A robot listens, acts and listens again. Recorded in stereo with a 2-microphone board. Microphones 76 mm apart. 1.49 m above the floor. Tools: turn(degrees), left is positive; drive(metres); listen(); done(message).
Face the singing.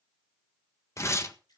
listen()
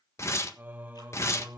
turn(degrees=-25)
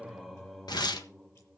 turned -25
done("Facing the singing, 1 to 2 m away.")